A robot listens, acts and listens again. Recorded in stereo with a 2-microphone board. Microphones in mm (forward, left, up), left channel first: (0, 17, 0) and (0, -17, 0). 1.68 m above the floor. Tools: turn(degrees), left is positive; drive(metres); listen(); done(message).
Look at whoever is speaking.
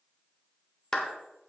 listen()
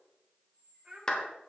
turn(degrees=-30)
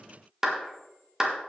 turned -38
listen()
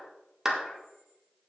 listen()
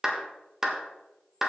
done("I heard a child speaking, but can't make it out now. It was about 5° left or 110° right.")